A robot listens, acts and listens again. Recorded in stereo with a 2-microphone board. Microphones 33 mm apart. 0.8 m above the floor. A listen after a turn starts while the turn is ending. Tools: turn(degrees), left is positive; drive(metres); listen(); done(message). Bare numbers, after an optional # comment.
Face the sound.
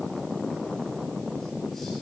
listen()
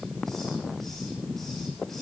listen()
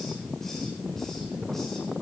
done("I can't make out anything to turn to.")